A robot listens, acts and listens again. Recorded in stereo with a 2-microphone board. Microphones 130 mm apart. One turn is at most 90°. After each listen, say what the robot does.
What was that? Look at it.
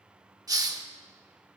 Turn 30° right.
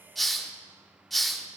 Facing the hiss.